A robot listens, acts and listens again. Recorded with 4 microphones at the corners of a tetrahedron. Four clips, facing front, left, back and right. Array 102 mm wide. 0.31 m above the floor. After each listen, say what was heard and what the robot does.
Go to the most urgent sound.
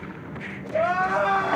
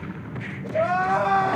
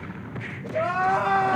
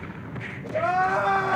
The crying: 30° right. Turn 30° right.
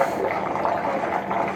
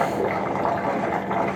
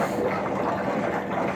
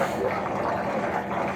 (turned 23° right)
Keep listening.
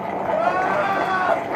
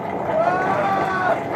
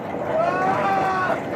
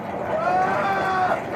Drive 1.0 m forward.
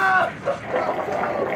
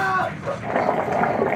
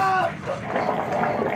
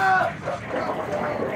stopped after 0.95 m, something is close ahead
I am next to the crying.